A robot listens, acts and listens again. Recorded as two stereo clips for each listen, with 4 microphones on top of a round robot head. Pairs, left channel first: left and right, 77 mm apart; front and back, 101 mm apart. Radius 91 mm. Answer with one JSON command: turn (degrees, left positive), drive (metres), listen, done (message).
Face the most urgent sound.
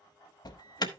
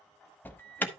{"turn": 70}
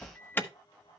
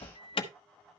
{"turn": 30}
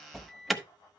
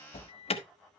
{"done": "Facing the alarm."}